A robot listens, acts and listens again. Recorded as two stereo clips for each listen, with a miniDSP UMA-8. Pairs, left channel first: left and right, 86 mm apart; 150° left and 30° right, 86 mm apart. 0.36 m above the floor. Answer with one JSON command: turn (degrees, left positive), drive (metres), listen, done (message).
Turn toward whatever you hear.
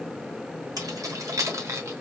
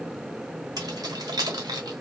{"turn": -45}
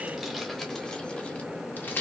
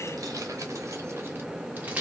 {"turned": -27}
{"turn": 40}
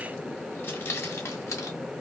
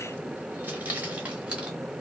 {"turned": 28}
{"turn": 45}
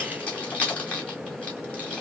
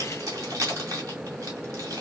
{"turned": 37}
{"turn": 15}
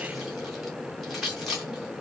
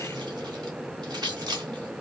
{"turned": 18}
{"done": "Found it: keys jangling, straight ahead, 1 to 2 m away."}